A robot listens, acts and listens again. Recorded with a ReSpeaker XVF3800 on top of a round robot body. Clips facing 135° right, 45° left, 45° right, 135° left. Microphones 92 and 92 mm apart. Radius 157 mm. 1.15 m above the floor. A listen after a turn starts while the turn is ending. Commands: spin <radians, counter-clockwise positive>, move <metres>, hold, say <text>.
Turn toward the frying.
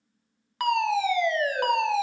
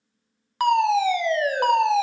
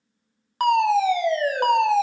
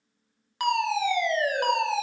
hold
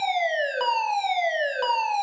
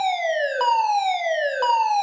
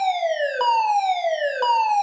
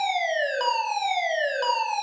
hold
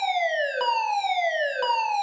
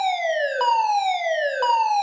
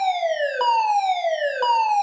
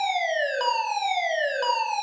say I can't make out frying, only a fire alarm.